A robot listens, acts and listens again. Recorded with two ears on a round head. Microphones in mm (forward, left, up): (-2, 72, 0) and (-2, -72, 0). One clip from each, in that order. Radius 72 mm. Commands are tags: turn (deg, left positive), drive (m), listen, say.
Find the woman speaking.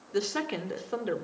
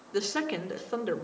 <turn deg="-30"/>
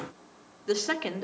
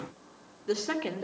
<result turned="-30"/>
<turn deg="25"/>
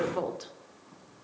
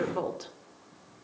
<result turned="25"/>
<say>Found it: a woman speaking, straight ahead.</say>